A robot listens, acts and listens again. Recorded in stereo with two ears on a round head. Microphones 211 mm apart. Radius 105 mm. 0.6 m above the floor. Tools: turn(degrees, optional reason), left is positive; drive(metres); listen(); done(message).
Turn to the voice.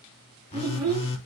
turn(degrees=-15, reason="The child speaking: about 15° right or 165° right.")
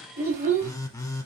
turn(degrees=-30, reason="The child speaking: about 30° right or 150° right.")
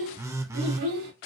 turn(degrees=-115, reason="So it is at 115° right.")
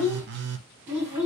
turn(degrees=-10, reason="The child speaking is now 10° right.")
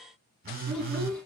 done("Found it: a child speaking, straight ahead, over 4 m away.")